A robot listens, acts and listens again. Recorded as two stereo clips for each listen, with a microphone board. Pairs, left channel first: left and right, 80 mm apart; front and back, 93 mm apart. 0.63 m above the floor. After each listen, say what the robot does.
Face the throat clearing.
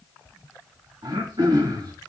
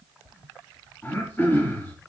Turn 70° right.
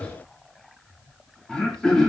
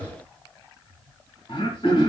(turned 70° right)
Turn 10° left.
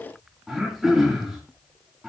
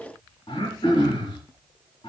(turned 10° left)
Facing the throat clearing, 2 to 4 m away.